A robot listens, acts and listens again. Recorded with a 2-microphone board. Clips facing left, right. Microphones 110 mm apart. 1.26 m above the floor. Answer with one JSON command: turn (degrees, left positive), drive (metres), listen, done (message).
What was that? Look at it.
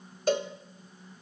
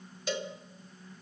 {"turn": 50}
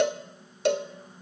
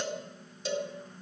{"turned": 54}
{"turn": 75}
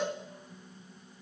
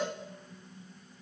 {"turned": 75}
{"done": "Found it: a cowbell, straight ahead."}